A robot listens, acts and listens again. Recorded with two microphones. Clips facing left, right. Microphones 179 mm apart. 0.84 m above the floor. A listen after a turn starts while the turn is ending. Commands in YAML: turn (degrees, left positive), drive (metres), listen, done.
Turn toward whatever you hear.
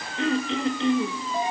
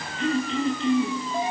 turn: 75
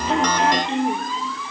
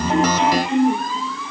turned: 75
turn: 30
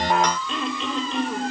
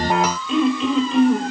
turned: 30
done: "Facing the throat clearing."